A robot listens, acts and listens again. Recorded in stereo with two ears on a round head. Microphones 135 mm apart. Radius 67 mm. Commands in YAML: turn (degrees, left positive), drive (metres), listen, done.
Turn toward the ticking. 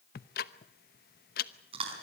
turn: 65
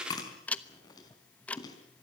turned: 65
turn: 10
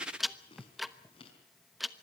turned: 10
done: "Found it: ticking, straight ahead, 1 to 2 m away."